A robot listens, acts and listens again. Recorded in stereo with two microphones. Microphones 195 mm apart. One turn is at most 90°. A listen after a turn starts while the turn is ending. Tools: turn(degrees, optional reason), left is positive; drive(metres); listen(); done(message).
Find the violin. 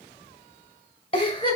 listen()
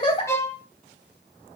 turn(degrees=30)
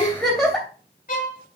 turn(degrees=90, reason="So it is at 135° left.")
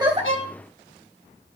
turn(degrees=45, reason="Nothing new. It was at 45° left.")
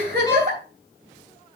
listen()
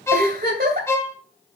turn(degrees=15, reason="The violin is now 15° left.")
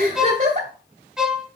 done("Found it: a violin, straight ahead.")